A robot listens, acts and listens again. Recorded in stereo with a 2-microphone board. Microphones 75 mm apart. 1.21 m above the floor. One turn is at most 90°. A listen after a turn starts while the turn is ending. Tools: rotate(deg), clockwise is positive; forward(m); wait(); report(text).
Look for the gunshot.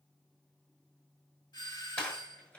rotate(-25)
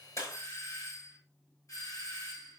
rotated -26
rotate(-90)
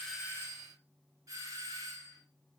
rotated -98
rotate(-35)
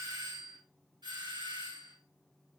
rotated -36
report("I heard a gunshot from this way, but can't make it out now.")